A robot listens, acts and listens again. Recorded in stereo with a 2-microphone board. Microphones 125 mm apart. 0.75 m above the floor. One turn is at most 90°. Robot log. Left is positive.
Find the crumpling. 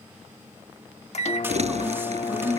note: The crumpling: about 60° right or 120° right.
cmd yaw -60
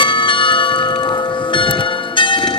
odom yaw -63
cmd idle
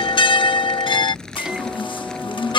end: Found it: crumpling, straight ahead.